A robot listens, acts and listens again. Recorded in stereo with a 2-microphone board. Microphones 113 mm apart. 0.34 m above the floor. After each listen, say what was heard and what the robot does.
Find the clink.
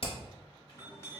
The clink: about 25° left or 155° left. Turn 25° left.
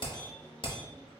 Keep listening.
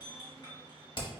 So it is at 125° left. Turn 125° left.
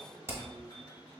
The clink is now 40° left. Turn 40° left.
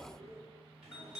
Found it: a clink, straight ahead.